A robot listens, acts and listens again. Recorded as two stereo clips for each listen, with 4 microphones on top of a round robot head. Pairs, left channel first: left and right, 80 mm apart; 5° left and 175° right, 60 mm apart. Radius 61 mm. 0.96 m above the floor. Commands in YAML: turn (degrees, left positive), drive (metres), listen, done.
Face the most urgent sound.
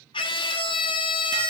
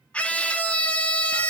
turn: 75
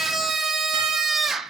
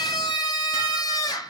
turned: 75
done: "Facing the scream."